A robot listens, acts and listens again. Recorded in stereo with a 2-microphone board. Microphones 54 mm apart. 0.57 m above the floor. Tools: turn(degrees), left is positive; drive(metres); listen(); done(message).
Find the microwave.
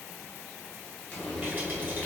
listen()
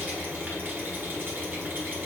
listen()
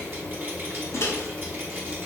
turn(degrees=55)
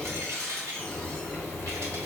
listen()
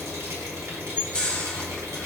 turn(degrees=25)
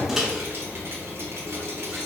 done("Facing the microwave.")